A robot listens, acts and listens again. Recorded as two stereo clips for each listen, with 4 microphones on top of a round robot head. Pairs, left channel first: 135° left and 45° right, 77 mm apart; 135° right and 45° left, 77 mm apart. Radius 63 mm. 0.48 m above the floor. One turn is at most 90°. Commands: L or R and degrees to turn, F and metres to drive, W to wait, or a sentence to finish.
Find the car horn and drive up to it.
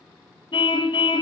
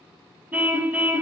L90
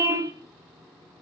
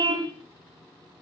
L10
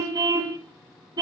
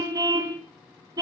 F1.0
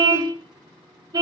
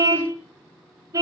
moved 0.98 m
F1.0
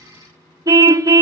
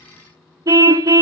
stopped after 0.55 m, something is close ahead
I am next to the car horn.